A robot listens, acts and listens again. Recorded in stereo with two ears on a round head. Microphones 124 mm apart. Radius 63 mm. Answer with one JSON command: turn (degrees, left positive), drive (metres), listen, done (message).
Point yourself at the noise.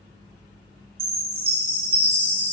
{"turn": -70}
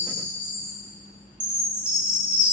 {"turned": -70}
{"done": "Found it: a chime, straight ahead, 2 to 4 m away."}